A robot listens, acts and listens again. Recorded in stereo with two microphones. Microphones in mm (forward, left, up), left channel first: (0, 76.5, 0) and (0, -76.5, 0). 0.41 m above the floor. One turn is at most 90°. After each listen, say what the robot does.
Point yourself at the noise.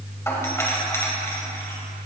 Turn 15° left.
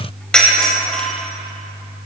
Found it: a doorbell, straight ahead.